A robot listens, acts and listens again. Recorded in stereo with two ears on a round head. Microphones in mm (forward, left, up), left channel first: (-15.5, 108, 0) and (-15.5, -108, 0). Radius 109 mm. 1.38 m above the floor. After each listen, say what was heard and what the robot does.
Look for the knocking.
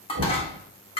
The knocking: about 40° right or 140° right. Turn 40° right.
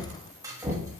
Facing the knocking, 1 to 2 m away.